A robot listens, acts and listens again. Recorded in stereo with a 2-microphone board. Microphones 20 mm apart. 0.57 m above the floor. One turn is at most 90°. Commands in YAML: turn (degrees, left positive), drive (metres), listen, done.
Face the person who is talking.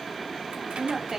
turn: -25
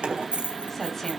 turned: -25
listen: true
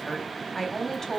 turn: 15
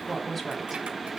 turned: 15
done: "Facing the woman speaking, 2 to 4 m away."